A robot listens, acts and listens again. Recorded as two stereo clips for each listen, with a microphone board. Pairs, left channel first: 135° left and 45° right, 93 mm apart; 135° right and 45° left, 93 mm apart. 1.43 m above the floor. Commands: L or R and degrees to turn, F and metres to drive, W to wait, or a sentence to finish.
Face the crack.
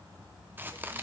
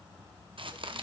L25
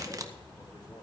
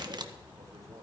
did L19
Found it: a crack, straight ahead, 1 to 2 m away.